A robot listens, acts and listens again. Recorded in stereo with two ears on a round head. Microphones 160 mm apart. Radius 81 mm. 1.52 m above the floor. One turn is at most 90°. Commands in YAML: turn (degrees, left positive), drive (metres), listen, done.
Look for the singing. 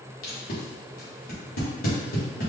listen: true
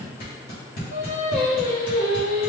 turn: 50
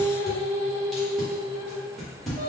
done: "Facing the singing, 1 to 2 m away."